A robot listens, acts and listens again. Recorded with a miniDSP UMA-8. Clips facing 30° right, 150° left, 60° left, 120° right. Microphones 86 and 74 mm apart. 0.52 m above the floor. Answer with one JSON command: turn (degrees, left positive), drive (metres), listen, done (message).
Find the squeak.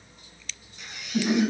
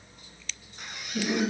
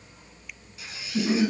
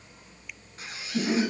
{"turn": -170}
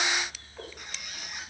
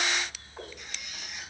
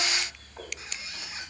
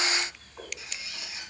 {"done": "Facing the squeak."}